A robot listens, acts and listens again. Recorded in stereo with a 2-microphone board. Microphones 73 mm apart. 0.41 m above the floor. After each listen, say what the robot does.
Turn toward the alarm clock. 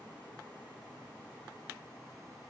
Keep listening.
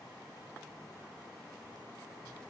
Keep listening.
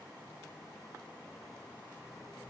I can't make out an alarm clock.